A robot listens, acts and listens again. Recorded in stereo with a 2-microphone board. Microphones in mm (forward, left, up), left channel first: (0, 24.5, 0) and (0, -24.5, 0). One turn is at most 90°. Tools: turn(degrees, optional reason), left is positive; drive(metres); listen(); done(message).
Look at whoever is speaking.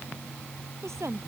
turn(degrees=-90)
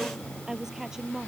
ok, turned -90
turn(degrees=-10, reason="So it is at 10° right.")
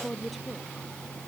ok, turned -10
done("Facing the woman speaking.")